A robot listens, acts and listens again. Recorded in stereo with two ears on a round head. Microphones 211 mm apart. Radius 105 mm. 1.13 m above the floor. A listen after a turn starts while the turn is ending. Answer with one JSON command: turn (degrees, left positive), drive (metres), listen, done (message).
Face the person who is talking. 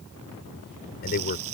{"turn": 40}
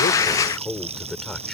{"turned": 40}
{"done": "Facing the man speaking."}